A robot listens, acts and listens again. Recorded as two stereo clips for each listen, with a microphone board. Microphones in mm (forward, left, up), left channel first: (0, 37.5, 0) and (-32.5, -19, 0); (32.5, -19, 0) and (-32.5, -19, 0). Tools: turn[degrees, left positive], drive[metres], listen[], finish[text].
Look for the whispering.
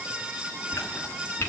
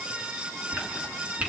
Thought: The whispering: 170° right.
Action: turn[-170]
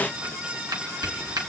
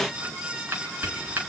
Thought: The whispering is now 45° right.
Action: turn[-45]
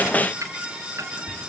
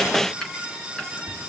Action: finish[Facing the whispering.]